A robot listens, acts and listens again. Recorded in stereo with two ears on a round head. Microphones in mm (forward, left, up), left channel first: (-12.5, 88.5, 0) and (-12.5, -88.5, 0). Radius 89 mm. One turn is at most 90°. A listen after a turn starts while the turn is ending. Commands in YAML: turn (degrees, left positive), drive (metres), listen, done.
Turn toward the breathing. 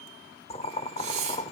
turn: -35
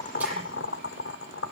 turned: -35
listen: true
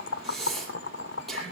done: "Facing the breathing, over 4 m away."